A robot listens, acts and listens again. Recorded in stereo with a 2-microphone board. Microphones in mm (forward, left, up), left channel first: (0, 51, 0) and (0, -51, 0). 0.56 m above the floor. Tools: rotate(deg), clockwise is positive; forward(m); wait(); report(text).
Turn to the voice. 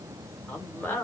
rotate(-20)
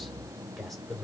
report("Found it: a man speaking, straight ahead.")